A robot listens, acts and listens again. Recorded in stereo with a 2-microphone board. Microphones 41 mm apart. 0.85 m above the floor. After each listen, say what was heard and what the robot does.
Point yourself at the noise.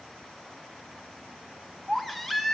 Turn 30° left.
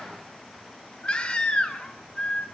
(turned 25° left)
So it is at 150° left. Turn 150° left.
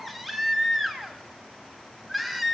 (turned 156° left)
Found it: a baby crying, straight ahead, 1 to 2 m away.